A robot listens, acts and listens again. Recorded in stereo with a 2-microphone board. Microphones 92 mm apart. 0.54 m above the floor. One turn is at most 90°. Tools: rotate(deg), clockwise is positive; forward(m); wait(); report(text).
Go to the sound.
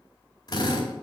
rotate(-45)
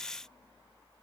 wait()
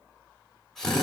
forward(1.0)
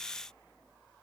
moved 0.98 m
wait()
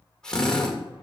rotate(-10)
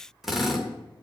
forward(1.0)
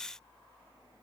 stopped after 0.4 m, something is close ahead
wait()
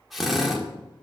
report("I am next to the drill.")